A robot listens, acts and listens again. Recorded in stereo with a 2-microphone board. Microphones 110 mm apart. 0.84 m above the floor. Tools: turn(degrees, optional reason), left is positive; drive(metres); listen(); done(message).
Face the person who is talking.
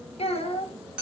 turn(degrees=65, reason="The child speaking: about 65° left or 115° left.")
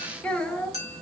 turn(degrees=10, reason="So it is at 10° left.")
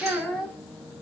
done("Found it: a child speaking, straight ahead, 1 to 2 m away.")